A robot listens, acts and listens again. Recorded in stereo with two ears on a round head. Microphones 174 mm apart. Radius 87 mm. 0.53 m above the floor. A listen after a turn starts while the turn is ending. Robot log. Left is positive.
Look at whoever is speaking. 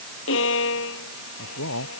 cmd yaw +90
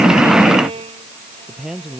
end: Found it: a man speaking, straight ahead.